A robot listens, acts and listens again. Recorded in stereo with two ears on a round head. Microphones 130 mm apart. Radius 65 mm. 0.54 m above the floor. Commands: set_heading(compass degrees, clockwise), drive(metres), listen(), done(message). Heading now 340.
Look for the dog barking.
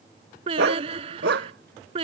set_heading(70)
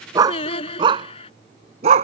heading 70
set_heading(120)
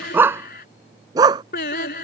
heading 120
set_heading(150)
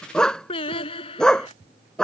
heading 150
done("Facing the dog barking.")